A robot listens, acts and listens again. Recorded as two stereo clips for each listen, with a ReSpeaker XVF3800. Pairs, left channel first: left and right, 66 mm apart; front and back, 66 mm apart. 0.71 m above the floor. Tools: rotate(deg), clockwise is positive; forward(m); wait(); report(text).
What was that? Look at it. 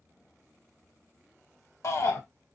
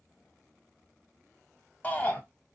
rotate(-60)
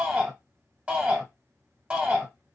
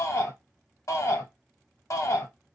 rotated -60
rotate(20)
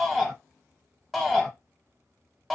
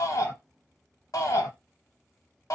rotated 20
report("Found it: a shout, straight ahead.")